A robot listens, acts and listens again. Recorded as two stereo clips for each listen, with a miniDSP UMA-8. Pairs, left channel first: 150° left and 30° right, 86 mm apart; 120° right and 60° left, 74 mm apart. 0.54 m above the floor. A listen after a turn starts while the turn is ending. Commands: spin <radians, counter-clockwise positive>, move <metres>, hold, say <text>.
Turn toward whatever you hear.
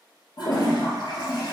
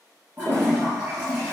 spin 2.18
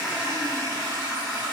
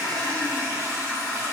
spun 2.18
say Facing the toilet flushing, 1 to 2 m away.